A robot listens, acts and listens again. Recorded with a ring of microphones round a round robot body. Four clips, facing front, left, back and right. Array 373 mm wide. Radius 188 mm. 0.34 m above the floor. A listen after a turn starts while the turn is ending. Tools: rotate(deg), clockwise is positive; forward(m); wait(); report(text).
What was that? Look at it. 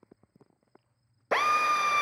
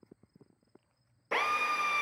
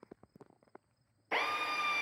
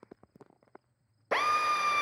rotate(20)
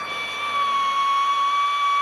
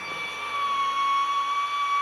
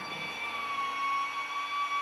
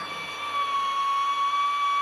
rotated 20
report("Facing the drill, under 1 m away.")